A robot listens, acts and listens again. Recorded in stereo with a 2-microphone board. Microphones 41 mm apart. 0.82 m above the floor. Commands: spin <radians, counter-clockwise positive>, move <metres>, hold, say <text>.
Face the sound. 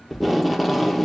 spin -0.52
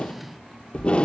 spin 0.44
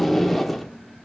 say Found it: tape being pulled, straight ahead.